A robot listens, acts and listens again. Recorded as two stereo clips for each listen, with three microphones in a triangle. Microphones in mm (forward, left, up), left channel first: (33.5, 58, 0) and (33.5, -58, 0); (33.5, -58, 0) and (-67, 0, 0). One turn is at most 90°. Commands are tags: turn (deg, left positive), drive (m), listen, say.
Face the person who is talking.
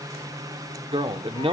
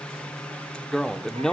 <turn deg="-90"/>
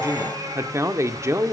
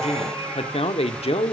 <turn deg="-30"/>
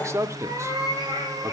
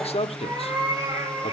<turn deg="-30"/>
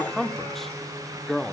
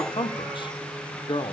<say>Facing the man speaking, 1 to 2 m away.</say>